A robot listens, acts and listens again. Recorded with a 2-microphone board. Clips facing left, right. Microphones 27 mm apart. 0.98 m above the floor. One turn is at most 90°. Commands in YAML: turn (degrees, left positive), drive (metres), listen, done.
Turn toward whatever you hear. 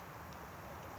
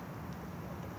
listen: true
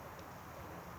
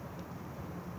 listen: true
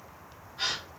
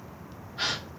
turn: -50
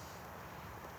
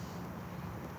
listen: true
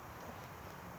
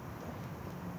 done: "I heard a gasp, but can't make it out now. It was about straight ahead or 80° right."